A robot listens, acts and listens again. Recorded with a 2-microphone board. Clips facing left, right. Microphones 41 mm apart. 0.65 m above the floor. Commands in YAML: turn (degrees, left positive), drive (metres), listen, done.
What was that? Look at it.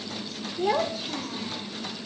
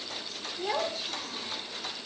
turn: 30
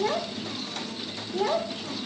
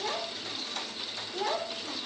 turn: 30
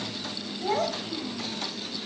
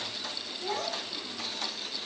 turn: 150
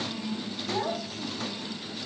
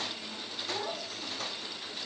turn: 30
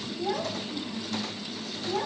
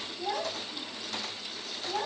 done: "Facing the child speaking."